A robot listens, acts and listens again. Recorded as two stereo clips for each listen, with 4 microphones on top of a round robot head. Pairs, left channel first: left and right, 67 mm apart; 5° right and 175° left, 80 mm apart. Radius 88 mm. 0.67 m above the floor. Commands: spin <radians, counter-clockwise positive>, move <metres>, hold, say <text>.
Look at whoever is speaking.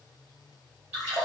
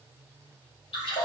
hold
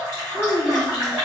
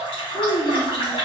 spin 0.26
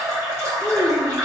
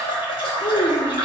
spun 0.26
say Facing the child speaking, under 1 m away.